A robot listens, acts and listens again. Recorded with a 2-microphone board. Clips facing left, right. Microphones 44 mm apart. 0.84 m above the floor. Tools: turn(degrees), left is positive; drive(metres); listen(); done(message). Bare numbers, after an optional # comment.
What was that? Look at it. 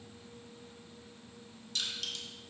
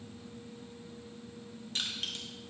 # The crushing: about 35° right or 145° right.
turn(-35)
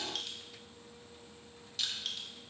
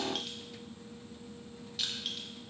done("Found it: crushing, straight ahead.")